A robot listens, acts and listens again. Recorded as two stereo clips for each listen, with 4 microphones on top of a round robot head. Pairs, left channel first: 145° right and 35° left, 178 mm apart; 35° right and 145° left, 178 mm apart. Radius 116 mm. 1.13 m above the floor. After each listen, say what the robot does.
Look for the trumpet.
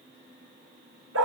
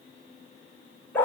Keep listening.
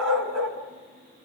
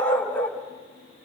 Keep listening.
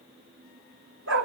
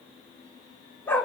I can't make out a trumpet to turn to.